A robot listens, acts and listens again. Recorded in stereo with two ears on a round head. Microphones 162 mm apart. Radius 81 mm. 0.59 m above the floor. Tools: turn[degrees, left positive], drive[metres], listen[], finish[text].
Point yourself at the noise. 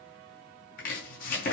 Thought: The chopping: about 50° left or 130° left.
Action: turn[50]
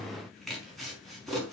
Action: finish[Found it: chopping, straight ahead.]